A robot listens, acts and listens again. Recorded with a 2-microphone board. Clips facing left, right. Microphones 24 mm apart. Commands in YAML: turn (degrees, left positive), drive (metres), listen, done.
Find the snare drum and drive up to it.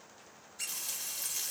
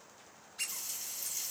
listen: true
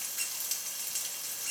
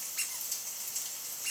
listen: true
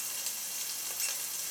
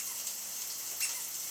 done: "I can't make out a snare drum to turn to."